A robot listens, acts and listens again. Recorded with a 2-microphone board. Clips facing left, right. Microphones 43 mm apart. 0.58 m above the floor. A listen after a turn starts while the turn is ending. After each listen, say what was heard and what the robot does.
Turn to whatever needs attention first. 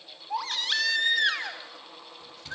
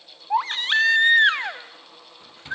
The baby crying: about 35° right or 145° right. Turn 35° right.
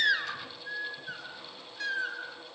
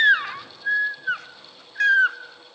So it is at 100° right. Turn 100° right.
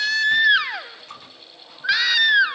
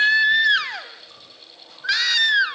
The baby crying is now 15° left. Turn 15° left.
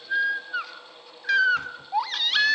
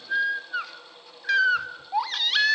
Facing the baby crying, 1 to 2 m away.